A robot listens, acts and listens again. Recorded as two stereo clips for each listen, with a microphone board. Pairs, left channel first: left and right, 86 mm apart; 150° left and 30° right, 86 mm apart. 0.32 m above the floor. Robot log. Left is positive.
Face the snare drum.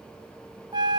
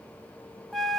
cmd idle
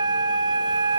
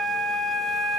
cmd idle
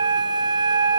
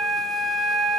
end: I can't make out a snare drum, only a flute.